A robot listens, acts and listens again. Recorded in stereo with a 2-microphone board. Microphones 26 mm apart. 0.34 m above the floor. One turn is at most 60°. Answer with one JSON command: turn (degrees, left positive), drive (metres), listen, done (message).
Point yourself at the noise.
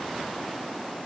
{"listen": true}
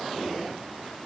{"listen": true}
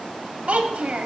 {"turn": -60}
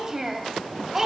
{"turn": -20}
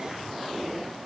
{"listen": true}
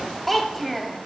{"done": "Found it: a child speaking, straight ahead, under 1 m away."}